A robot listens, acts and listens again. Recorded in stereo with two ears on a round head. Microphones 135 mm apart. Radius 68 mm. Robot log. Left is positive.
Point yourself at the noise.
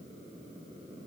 cmd idle
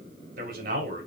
note: The man speaking: about 60° right or 120° right.
cmd yaw -60
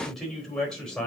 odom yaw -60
end: Found it: a man speaking, straight ahead, 2 to 4 m away.